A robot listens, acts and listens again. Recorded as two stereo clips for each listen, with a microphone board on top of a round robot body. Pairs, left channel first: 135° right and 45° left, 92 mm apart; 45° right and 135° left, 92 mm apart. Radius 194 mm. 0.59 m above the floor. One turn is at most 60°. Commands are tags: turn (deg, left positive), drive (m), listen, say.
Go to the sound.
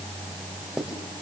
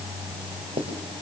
<turn deg="60"/>
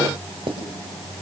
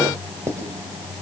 <turn deg="60"/>
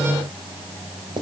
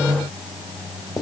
<drive m="1.0"/>
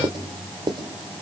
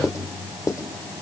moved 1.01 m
<turn deg="10"/>
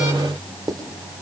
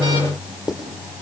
<drive m="1.0"/>
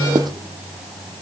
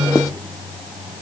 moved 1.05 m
<listen/>
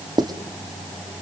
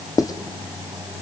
<drive m="1.0"/>
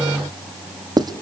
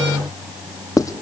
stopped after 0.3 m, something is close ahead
<say>Arrived at the writing, straight ahead.</say>